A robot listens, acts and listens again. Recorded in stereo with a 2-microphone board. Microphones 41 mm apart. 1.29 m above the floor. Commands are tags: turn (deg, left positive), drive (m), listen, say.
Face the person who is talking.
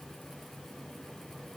<listen/>
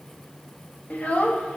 <turn deg="30"/>
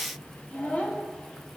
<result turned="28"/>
<turn deg="30"/>
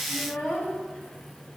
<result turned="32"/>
<turn deg="35"/>
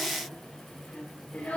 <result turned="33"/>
<turn deg="125"/>
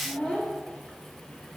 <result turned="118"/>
<say>Facing the child speaking.</say>